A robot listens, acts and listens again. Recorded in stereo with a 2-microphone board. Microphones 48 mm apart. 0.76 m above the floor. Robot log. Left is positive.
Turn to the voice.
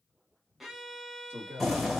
note: The man speaking: about 45° right or 135° right.
cmd yaw -45
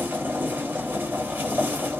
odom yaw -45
cmd idle
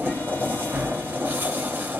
cmd idle
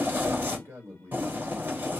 note: So it is at 75° right.
cmd yaw -75
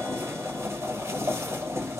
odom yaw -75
cmd idle
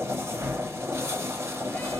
cmd idle
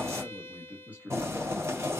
note: The man speaking is now 35° right.
cmd yaw -35
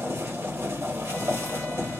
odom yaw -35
cmd idle
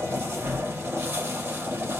cmd idle
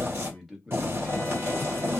end: Found it: a man speaking, straight ahead.